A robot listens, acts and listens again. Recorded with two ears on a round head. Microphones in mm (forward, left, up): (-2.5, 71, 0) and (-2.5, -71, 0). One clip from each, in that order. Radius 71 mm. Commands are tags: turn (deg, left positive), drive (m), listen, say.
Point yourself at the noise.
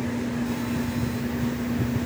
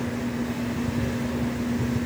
<listen/>
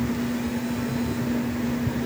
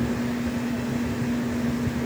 <listen/>
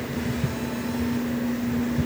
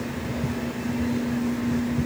<say>I can't make out anything to turn to.</say>